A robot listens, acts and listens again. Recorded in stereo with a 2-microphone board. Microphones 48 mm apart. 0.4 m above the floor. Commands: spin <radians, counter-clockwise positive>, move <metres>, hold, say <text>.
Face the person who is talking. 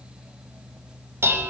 hold
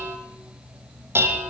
hold
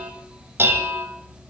say I can't make out anyone speaking to turn to.